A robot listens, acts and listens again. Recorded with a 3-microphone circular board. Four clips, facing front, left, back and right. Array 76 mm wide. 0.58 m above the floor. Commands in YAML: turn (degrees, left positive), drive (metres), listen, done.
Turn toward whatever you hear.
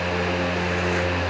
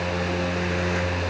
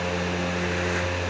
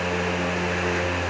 listen: true
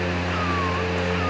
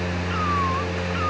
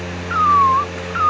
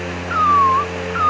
turn: -145
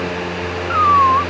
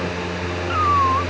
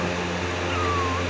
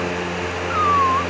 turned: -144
done: "Found it: a cat meowing, straight ahead."